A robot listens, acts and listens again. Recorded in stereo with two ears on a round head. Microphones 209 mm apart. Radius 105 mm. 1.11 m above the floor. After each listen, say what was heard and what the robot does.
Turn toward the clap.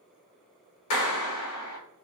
The clap: about 75° left or 105° left. Turn 75° left.
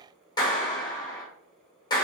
So it is at 20° left. Turn 20° left.
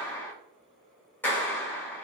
The clap is now 10° left. Turn 10° left.
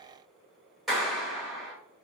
Found it: a clap, straight ahead, under 1 m away.